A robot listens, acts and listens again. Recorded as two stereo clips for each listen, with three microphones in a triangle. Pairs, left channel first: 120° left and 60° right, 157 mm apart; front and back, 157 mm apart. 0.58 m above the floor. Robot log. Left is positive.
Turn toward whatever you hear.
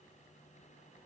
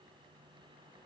cmd idle
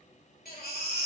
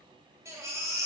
note: The baby crying: 110° left.
cmd yaw +110
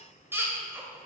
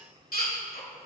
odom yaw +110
note: The baby crying is now 15° left.
cmd yaw +15
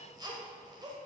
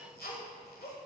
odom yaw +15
end: Facing the baby crying, 1 to 2 m away.